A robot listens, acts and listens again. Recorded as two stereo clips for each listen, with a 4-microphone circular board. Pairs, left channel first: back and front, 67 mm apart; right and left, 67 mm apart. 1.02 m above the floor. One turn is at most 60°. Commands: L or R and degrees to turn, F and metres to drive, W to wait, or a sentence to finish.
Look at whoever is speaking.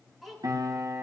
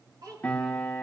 L60
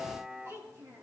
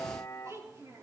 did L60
L45
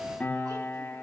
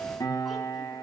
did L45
W
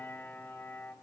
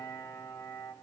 W
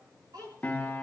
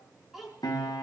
Facing the child speaking, over 4 m away.